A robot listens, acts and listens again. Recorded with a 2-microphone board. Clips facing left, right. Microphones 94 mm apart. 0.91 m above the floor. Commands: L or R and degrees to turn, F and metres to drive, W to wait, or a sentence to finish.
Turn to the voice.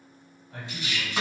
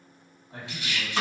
R25
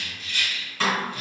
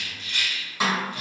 W
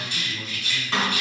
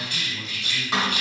R130
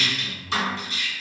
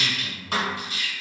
R15
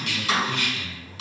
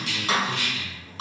Found it: a man speaking, straight ahead, 1 to 2 m away.